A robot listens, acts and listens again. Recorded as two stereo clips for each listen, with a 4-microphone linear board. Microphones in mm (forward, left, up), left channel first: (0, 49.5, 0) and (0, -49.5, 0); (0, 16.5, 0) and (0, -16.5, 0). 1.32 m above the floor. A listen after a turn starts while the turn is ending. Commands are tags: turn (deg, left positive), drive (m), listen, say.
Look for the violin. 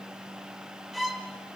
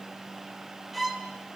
<turn deg="30"/>
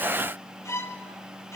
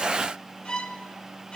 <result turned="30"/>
<turn deg="150"/>
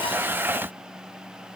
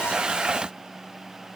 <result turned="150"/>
<listen/>
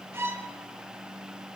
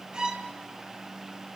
<turn deg="-25"/>
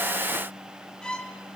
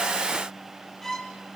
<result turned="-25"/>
<turn deg="10"/>
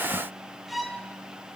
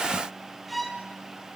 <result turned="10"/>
<say>Facing the violin, 1 to 2 m away.</say>